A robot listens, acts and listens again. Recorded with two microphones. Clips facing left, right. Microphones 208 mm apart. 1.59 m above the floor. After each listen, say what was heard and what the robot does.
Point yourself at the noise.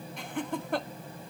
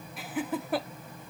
Turn 30° right.
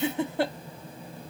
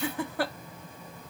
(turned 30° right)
So it is at 25° left. Turn 25° left.
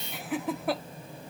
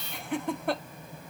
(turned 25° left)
Facing the laughter.